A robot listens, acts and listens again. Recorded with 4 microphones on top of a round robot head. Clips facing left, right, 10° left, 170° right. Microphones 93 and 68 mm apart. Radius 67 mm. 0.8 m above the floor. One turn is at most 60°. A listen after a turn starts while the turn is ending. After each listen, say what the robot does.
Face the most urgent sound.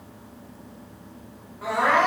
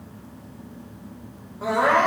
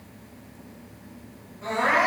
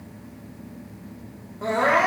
Turn 60° right.
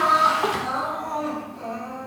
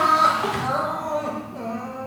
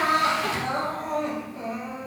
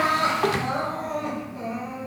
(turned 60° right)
Turn 60° right.
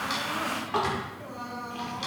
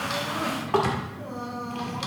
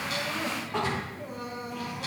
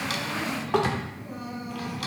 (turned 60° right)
Turn 30° right.
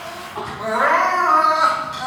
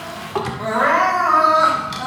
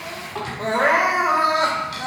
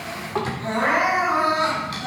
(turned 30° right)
Facing the crying, 2 to 4 m away.